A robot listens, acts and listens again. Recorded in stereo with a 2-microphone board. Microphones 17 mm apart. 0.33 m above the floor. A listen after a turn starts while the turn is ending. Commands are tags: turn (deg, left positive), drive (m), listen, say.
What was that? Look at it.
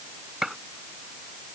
<turn deg="-20"/>
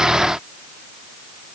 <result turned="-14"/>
<listen/>
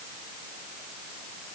<say>I heard a gunshot, but can't make it out now. It was about 5° right or 145° right.</say>